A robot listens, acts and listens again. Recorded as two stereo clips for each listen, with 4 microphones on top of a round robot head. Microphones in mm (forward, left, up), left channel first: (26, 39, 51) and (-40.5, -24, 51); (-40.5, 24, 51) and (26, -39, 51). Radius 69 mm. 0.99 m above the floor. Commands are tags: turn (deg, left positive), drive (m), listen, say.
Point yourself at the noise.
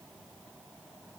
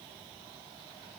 <listen/>
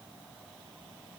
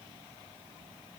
<listen/>
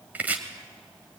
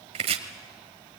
<turn deg="-60"/>
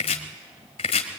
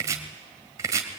<turn deg="15"/>
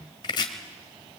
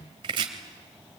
<say>Found it: chopping, straight ahead.</say>